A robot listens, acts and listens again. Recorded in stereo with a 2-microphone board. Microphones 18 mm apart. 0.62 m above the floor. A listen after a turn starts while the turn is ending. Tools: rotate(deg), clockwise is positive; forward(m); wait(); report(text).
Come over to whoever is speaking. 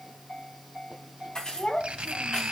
rotate(-60)
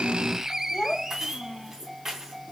rotate(-60)
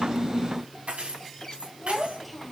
forward(1.0)
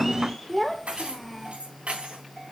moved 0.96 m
forward(1.0)
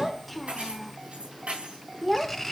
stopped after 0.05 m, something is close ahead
report("Arrived at the child speaking, straight ahead.")